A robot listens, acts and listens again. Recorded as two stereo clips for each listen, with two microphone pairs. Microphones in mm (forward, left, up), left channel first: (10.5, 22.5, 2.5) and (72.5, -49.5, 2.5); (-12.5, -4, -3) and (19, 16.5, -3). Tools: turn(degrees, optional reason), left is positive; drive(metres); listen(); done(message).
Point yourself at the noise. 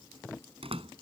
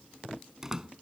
turn(degrees=-40, reason="The door slam: 40° right.")
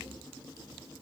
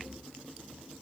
done("I heard a door slam from this way, but can't make it out now.")